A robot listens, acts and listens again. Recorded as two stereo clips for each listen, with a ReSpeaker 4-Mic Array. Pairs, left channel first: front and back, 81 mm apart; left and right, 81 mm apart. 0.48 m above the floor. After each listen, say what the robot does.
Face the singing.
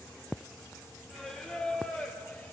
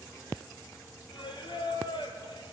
Turn 75° left.
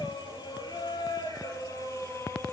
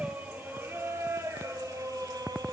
Turn 55° right.
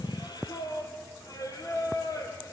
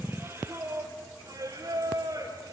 Turn 45° right.
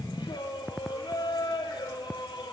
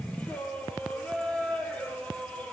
Turn 15° left.
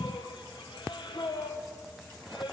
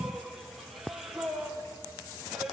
Found it: singing, straight ahead.